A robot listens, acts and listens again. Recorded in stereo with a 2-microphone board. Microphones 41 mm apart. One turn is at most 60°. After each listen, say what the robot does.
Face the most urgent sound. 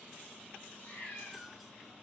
Keep listening.
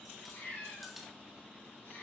Keep listening.
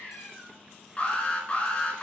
Turn 30° left.
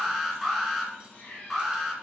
Found it: an alarm, straight ahead, 2 to 4 m away.